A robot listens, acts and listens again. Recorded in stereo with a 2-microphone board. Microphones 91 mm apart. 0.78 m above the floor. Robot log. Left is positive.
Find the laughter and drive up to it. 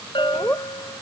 note: The laughter: about 20° left or 160° left.
cmd yaw +20
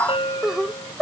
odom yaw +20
cmd fwd 1.0
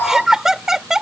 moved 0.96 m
cmd fwd 1.0
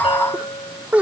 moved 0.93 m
note: The laughter is now 20° right.
cmd yaw -20
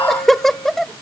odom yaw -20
cmd fwd 1.0
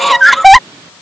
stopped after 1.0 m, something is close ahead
end: I am next to the laughter.